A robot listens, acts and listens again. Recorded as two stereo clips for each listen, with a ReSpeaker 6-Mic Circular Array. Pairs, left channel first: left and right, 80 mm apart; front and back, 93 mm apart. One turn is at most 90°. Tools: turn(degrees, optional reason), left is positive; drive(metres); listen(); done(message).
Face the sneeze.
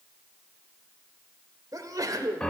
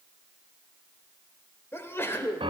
turn(degrees=-60, reason="The sneeze: 60° right.")
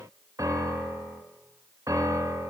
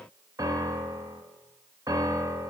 done("Facing where the sneeze came from. I can't hear it now.")